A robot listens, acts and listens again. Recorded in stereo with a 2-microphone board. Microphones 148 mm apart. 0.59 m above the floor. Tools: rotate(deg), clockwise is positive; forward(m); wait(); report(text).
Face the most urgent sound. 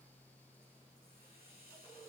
wait()
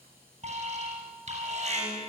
rotate(50)
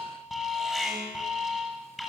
report("Found it: an alarm, straight ahead, over 4 m away.")